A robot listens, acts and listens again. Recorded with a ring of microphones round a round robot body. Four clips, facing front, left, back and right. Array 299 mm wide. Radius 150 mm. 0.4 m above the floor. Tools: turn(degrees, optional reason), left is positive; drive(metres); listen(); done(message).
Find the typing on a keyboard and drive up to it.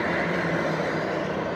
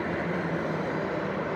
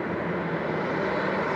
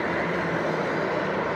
listen()
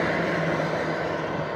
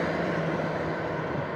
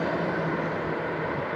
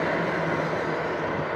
listen()
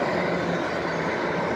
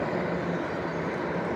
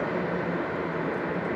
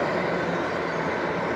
done("I can't make out typing on a keyboard to turn to.")